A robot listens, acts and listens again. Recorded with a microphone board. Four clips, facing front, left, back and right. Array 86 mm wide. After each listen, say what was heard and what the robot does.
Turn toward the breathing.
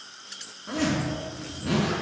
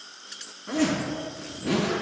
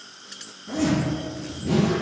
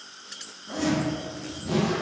Keep listening.
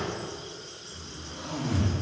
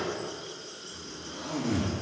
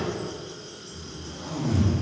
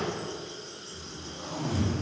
Keep listening.
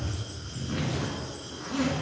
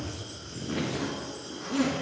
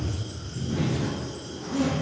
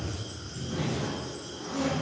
I can't make out breathing to turn to.